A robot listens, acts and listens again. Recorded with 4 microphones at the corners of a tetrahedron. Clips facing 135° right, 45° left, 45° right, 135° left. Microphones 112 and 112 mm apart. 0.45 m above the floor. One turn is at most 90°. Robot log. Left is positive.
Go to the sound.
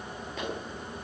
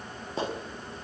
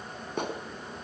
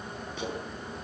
note: The clap: 10° right.
cmd yaw -10
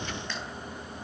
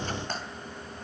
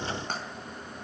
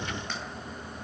cmd idle
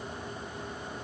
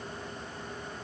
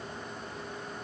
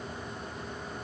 cmd idle
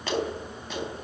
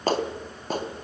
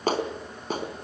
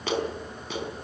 cmd fwd 1.0
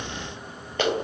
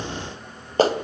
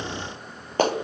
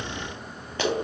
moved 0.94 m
cmd fwd 1.0
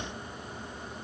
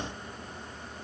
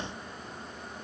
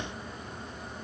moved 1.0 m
cmd idle
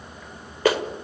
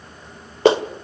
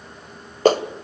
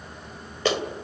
note: The clap is now 15° right.
cmd yaw -15
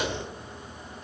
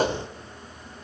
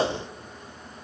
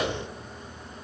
cmd idle
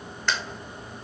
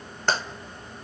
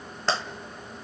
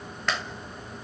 cmd fwd 1.0
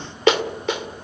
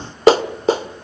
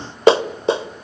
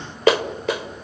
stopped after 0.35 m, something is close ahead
end: Arrived at the clap, straight ahead.